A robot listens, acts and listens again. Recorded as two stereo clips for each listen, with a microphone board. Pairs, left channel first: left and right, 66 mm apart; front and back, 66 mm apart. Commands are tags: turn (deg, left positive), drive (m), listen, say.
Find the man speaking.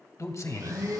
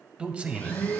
<turn deg="115"/>
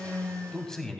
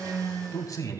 <turn deg="10"/>
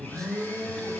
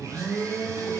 <say>Facing the man speaking, 2 to 4 m away.</say>